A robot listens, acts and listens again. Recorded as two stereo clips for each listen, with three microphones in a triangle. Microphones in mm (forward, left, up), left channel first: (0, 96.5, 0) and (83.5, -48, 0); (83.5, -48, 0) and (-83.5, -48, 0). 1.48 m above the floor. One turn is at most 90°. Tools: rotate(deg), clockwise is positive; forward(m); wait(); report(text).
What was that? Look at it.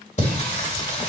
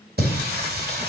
rotate(-90)
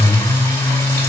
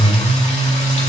rotate(-45)
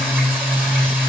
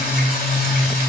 rotate(-20)
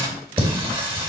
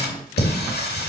report("Facing the singing.")